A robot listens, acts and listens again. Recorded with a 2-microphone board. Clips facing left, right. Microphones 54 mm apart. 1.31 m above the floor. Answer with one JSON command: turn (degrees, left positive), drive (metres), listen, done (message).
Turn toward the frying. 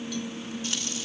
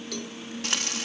{"turn": -60}
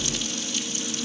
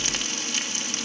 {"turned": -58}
{"turn": -55}
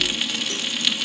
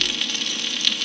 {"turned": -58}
{"done": "Found it: frying, straight ahead."}